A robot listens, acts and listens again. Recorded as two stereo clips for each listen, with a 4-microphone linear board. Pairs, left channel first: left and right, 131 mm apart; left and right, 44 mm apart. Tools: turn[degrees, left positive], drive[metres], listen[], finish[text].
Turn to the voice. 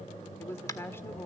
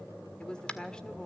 Thought: The woman speaking: about 20° left or 160° left.
Action: turn[20]
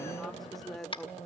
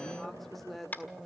Action: finish[Facing the woman speaking, 1 to 2 m away.]